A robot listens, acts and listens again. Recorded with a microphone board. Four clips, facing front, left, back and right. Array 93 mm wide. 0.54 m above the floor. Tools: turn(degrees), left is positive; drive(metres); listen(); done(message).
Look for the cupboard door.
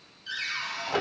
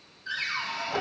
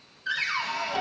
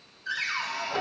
turn(degrees=-170)
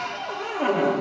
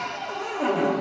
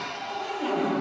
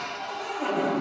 turn(degrees=25)
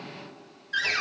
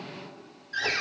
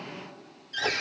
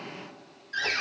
done("Facing the cupboard door, 1 to 2 m away.")